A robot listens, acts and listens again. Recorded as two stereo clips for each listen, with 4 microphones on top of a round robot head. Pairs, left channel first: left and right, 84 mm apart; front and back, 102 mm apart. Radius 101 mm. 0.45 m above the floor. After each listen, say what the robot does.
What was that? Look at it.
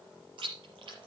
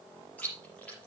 Turn 75° right.
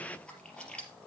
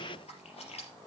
Turn 10° left.
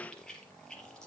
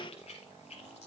Turn 10° left.
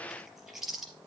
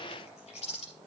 Facing the chewing, 2 to 4 m away.